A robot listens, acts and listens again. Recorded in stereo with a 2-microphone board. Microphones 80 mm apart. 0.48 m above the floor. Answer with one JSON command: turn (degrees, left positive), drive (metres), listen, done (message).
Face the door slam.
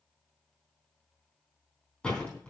{"turn": 30}
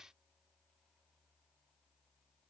{"listen": true}
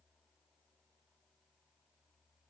{"done": "I heard a door slam, but can't make it out now. It was about 20° right or 140° left."}